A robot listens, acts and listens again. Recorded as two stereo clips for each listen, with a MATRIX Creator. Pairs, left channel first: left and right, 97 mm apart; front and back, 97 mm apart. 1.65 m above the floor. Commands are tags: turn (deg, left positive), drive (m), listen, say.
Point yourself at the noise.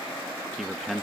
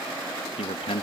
<say>Found it: a man speaking, straight ahead.</say>